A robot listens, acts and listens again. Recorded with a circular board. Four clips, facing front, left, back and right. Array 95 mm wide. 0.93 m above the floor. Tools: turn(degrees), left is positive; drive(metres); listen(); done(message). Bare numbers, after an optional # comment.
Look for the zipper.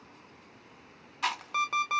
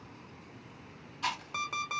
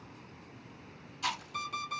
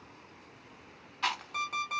listen()
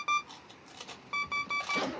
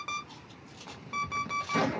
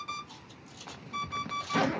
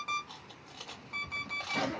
# The zipper: 160° left.
turn(160)
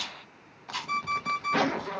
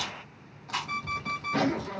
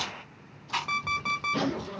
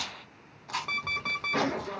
done("Facing the zipper.")